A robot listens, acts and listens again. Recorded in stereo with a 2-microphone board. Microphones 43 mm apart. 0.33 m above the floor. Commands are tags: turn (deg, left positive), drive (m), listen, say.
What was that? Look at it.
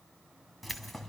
<turn deg="30"/>
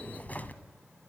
<turn deg="135"/>
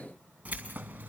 <turn deg="-45"/>
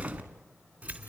<turn deg="-35"/>
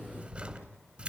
<turn deg="-25"/>
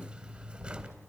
<turn deg="-20"/>
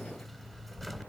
<say>Facing the keys jangling, 2 to 4 m away.</say>